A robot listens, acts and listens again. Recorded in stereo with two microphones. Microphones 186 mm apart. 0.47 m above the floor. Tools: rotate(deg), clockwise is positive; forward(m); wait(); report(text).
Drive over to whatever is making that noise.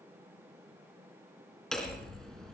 rotate(-30)
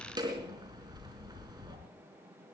rotate(25)
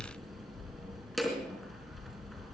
forward(1.0)
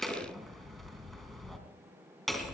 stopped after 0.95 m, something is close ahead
report("Blocked. The hammering is further on, straight ahead.")